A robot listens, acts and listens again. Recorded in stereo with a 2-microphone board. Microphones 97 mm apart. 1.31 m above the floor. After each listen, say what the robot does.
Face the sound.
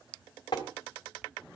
Turn 45° left.
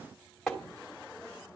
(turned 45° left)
Facing the tapping, 2 to 4 m away.